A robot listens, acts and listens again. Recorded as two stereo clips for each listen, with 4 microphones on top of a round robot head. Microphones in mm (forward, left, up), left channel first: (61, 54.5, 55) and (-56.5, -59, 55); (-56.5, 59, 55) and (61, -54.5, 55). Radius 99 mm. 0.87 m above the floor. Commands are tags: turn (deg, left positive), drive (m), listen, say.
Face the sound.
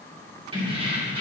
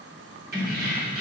<turn deg="-80"/>
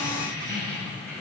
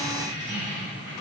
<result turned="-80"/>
<turn deg="-40"/>
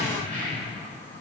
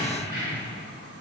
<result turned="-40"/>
<turn deg="-15"/>
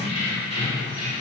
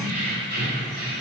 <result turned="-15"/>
<turn deg="-10"/>
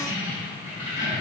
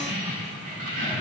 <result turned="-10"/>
<say>Found it: keys jangling, straight ahead, over 4 m away.</say>